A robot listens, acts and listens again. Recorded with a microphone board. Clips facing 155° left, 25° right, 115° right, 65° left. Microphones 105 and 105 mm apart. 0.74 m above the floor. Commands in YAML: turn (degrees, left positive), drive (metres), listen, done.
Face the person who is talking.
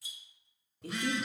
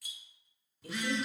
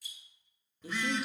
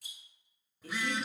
turn: 165
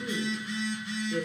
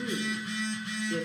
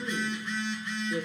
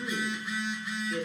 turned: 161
turn: -40
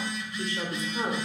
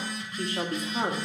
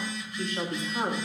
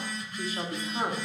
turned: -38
turn: -25
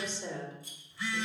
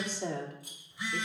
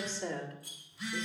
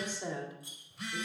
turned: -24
turn: -10
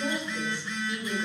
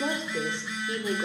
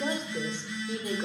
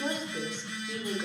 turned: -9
turn: -10
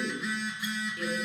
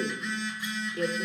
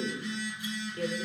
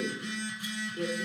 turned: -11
done: "Facing the woman speaking."